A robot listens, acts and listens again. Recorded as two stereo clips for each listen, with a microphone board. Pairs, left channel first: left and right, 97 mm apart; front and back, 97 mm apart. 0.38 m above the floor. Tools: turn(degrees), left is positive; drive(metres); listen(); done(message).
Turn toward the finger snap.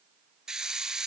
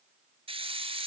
listen()
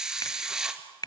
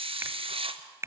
turn(degrees=125)
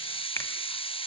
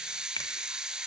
listen()
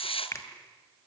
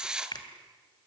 turn(degrees=35)
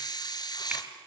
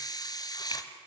listen()
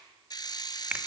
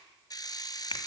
turn(degrees=-15)
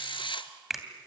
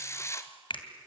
done("Facing the finger snap, 2 to 4 m away.")